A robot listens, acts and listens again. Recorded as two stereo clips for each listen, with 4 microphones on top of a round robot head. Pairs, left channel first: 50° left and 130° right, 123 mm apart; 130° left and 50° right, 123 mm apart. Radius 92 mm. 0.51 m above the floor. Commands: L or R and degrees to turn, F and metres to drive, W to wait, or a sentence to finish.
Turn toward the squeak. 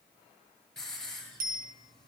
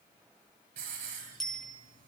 W
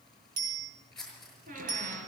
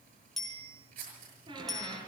R110
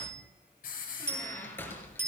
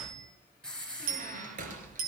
R25
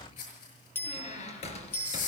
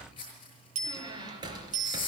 L10
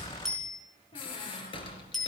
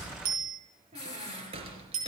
Found it: a squeak, straight ahead.